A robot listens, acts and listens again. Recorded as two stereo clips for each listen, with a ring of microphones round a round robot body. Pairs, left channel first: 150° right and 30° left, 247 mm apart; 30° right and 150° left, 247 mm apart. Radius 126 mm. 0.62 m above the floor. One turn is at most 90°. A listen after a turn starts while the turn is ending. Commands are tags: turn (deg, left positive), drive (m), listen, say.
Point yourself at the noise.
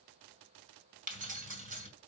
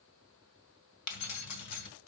<turn deg="-30"/>
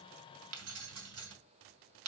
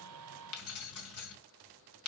<say>Found it: keys jangling, straight ahead, 2 to 4 m away.</say>